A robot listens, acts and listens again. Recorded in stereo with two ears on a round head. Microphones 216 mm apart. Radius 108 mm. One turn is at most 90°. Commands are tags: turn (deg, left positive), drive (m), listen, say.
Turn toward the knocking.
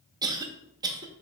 <listen/>
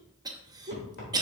<turn deg="45"/>
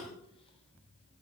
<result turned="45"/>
<listen/>
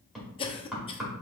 <say>Found it: knocking, straight ahead.</say>